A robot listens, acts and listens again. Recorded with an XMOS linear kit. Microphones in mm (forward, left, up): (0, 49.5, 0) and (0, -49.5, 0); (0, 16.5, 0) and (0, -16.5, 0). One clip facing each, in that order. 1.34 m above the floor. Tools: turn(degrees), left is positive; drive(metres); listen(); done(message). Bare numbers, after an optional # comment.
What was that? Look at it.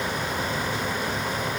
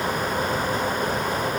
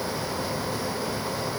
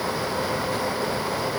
listen()
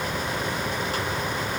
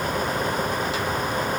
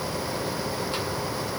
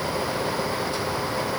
listen()
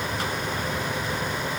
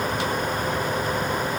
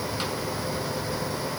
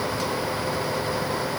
done("I can't make out anything to turn to.")